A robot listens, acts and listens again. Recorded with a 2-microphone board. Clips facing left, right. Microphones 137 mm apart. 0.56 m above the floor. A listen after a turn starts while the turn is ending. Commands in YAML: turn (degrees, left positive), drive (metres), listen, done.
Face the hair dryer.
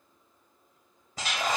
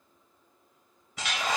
turn: 40
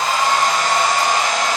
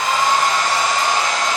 turn: 105
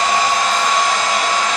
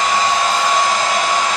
turn: -15
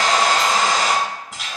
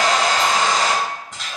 done: "Facing the hair dryer."